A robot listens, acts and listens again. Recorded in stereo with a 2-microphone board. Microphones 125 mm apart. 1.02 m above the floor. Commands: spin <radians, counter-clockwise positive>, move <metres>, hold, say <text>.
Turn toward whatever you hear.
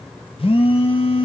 spin 0.87
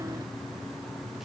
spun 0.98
hold
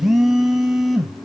say Facing the phone buzzing.